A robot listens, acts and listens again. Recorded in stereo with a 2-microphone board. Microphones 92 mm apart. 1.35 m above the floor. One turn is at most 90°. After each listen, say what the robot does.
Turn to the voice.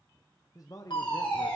Turn 45° left.
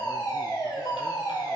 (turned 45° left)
Keep listening.
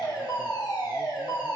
Keep listening.
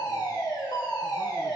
I heard a man speaking, but can't make it out now. It was about straight ahead or 90° left.